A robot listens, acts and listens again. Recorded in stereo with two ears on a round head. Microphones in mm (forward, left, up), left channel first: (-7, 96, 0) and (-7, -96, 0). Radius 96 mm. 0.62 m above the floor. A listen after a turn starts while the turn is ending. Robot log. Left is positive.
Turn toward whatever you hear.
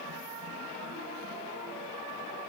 cmd idle
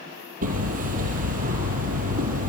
note: The hammering: about 40° right or 140° right.
cmd yaw -40
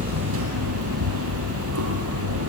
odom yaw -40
note: So it is at 105° right.
cmd yaw -105
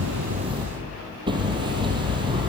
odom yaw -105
note: The hammering is now 20° right.
cmd yaw -20
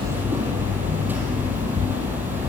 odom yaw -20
note: The hammering is now 10° right.
cmd yaw -10
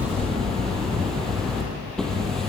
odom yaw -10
end: Found it: hammering, straight ahead.